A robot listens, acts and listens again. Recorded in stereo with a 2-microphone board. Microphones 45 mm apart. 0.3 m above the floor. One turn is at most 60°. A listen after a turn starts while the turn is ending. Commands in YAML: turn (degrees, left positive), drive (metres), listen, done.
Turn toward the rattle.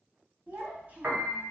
listen: true
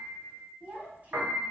listen: true
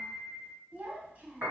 done: "I can't make out a rattle, only a piano and a child speaking."